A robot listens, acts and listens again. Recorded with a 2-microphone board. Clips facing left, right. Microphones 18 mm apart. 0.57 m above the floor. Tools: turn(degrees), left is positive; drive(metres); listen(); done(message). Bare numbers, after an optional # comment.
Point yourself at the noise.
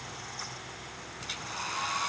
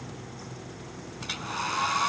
turn(-30)
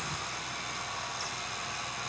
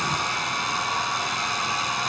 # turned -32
# So it is at 135° right.
turn(-135)
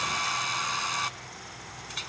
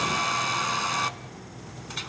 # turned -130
done("Facing the hair dryer, under 1 m away.")